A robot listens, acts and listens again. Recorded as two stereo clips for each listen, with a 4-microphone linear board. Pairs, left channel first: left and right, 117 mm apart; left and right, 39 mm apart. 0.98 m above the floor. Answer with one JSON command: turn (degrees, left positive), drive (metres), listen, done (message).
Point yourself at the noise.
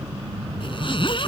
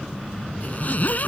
{"turn": 45}
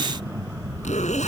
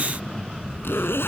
{"turn": 90}
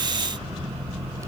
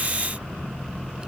{"listen": true}
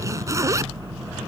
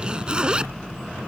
{"turn": -25}
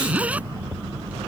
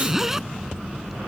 {"turn": -10}
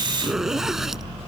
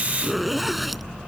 {"done": "Facing the zipper."}